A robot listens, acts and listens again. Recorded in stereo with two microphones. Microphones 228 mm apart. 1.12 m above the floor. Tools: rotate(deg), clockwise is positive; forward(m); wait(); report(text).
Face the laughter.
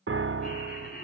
rotate(-40)
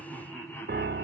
rotate(-10)
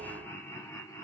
rotate(-15)
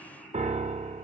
report("Facing the laughter.")